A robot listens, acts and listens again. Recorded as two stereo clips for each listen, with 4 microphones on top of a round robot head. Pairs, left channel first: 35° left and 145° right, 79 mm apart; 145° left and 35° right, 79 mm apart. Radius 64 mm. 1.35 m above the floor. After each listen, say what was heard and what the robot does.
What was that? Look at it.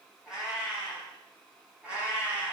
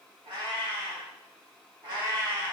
The cat meowing: 75° right. Turn 75° right.
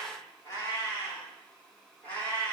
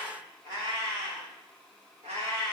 The cat meowing is now 30° right. Turn 30° right.
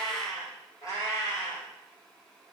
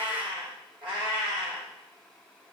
The cat meowing is now 10° right. Turn 10° right.
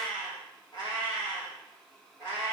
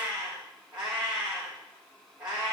Facing the cat meowing, 2 to 4 m away.